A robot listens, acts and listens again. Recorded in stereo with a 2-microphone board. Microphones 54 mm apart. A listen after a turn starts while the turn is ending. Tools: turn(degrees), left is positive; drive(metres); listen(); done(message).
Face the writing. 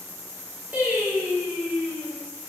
listen()
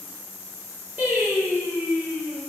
listen()
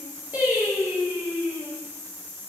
done("I can't make out writing, only singing.")